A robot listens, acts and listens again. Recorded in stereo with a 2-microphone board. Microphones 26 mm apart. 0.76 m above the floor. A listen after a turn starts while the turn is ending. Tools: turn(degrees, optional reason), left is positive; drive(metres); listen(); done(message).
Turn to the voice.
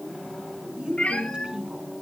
turn(degrees=-35, reason="The woman speaking: about 35° right or 145° right.")
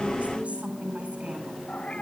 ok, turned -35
turn(degrees=-105, reason="So it is at 105° right.")
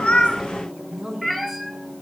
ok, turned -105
turn(degrees=-20, reason="The woman speaking is now 20° right.")
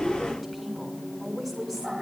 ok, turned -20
done("Found it: a woman speaking, straight ahead, over 4 m away.")